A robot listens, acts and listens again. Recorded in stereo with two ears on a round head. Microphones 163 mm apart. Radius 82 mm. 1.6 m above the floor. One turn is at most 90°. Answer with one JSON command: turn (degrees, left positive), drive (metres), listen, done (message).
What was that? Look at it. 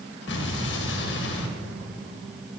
{"turn": 70}
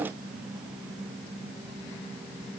{"listen": true}
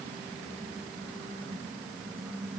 {"done": "I heard an explosion, but can't make it out now. It was about straight ahead or 40° left."}